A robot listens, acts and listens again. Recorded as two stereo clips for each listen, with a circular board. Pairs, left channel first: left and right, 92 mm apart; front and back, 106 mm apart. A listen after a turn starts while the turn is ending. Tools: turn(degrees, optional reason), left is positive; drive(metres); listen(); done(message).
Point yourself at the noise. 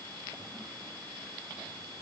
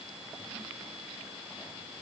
listen()
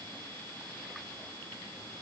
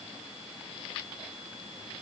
listen()
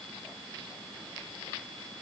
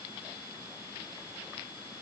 done("I can't make out anything.")